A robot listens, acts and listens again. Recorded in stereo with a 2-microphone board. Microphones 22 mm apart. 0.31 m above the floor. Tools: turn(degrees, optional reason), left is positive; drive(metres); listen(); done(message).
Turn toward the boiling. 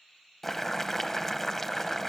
turn(degrees=30)
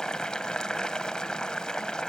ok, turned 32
turn(degrees=135, reason="So it is at 135° left.")
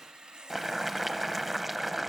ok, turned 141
done("Found it: boiling, straight ahead, under 1 m away.")